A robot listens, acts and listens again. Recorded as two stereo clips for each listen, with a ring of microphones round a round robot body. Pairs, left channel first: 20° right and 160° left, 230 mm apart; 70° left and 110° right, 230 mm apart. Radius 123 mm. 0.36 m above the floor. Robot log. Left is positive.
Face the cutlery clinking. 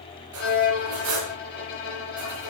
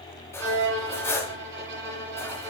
note: The cutlery clinking: 145° left.
cmd yaw +145
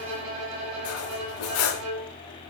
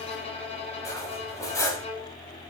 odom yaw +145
note: The cutlery clinking is now 10° right.
cmd yaw -10
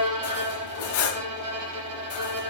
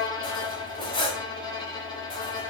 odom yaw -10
end: Facing the cutlery clinking.